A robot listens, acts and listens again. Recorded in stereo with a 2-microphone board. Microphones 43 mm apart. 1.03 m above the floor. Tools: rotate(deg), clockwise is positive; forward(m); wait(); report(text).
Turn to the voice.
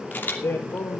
rotate(-90)
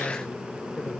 wait()
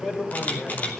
rotate(-10)
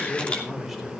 report("Found it: a man speaking, straight ahead.")